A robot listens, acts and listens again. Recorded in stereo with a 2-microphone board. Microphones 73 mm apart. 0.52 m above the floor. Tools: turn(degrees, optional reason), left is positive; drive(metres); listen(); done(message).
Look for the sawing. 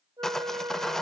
turn(degrees=30)
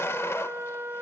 turn(degrees=140, reason="So it is at 140° left.")
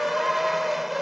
done("Found it: sawing, straight ahead.")